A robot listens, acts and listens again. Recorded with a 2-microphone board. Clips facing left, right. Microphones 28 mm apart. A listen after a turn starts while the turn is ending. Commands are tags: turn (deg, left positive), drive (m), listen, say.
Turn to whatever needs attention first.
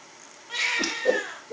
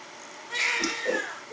<turn deg="35"/>
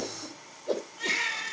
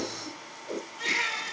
<say>Found it: a baby crying, straight ahead.</say>